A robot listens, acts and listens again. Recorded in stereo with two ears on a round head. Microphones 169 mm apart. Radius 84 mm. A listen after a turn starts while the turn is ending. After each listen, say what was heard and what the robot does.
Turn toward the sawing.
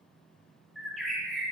Keep listening.
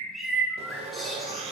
The sawing: about 35° right or 145° right. Turn 35° right.
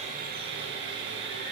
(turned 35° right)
So it is at 115° right. Turn 115° right.
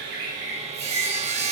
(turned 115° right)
The sawing is now 35° right. Turn 35° right.
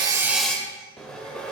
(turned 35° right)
Facing the sawing.